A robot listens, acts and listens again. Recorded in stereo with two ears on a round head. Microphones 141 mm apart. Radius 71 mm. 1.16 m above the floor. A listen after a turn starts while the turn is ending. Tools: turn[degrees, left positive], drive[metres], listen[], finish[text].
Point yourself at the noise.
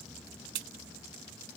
Thought: The crack: about 70° right or 110° right.
Action: turn[-70]
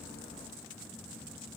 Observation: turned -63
Action: listen[]
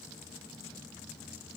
Action: finish[I heard a crack, but can't make it out now. It was about 10° right or 45° right.]